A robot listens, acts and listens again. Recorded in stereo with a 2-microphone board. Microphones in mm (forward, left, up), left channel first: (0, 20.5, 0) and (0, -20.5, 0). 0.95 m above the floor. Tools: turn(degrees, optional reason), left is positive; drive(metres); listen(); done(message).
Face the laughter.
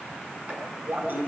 turn(degrees=-55, reason="The laughter: about 55° right or 125° right.")
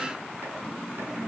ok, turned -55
done("Facing the laughter, over 4 m away.")